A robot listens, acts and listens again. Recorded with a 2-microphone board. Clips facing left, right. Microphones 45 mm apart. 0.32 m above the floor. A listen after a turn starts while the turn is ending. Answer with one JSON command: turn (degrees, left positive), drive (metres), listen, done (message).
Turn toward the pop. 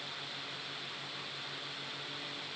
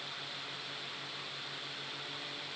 {"listen": true}
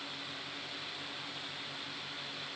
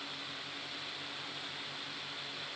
{"listen": true}
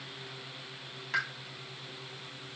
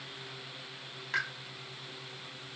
{"turn": 30}
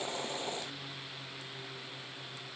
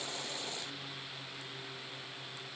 {"listen": true}
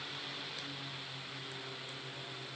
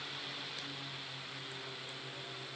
{"done": "I heard a pop, but can't make it out now. It was about 30° right or 150° left."}